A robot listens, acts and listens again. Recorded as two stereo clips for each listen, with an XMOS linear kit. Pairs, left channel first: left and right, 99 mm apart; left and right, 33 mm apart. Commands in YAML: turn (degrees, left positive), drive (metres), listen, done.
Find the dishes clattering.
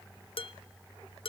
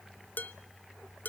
turn: 65
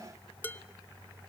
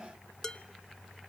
turn: 20
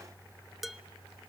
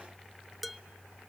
done: "Found it: dishes clattering, straight ahead, under 1 m away."